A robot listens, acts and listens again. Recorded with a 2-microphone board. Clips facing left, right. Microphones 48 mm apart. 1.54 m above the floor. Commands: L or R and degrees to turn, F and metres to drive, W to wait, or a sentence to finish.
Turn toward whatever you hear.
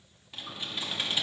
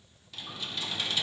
L25
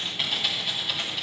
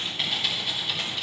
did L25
Facing the typing on a keyboard, 1 to 2 m away.